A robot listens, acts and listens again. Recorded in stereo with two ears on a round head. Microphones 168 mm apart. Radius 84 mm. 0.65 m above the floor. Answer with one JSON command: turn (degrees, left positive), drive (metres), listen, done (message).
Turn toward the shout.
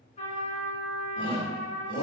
{"turn": 25}
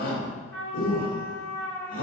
{"turn": 125}
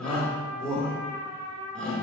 {"done": "Found it: a shout, straight ahead, 1 to 2 m away."}